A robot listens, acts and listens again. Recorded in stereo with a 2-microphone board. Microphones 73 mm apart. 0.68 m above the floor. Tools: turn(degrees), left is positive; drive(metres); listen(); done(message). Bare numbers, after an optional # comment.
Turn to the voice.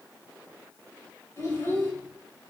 # The child speaking: about 35° left or 145° left.
turn(35)
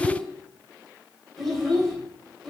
done("Found it: a child speaking, straight ahead, 2 to 4 m away.")